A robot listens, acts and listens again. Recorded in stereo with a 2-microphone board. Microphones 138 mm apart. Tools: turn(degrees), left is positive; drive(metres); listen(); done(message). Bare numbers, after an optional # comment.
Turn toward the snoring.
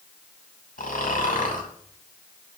turn(90)
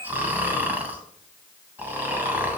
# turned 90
# So it is at 15° right.
turn(-15)
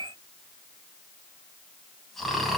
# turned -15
done("Found it: snoring, straight ahead, 2 to 4 m away.")